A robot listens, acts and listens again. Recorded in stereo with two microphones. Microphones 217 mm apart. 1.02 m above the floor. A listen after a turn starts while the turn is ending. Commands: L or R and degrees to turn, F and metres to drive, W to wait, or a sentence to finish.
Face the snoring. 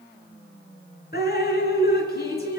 W
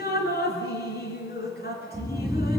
L30
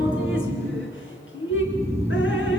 R30
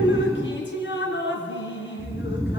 R15
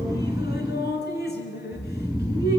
Found it: snoring, straight ahead.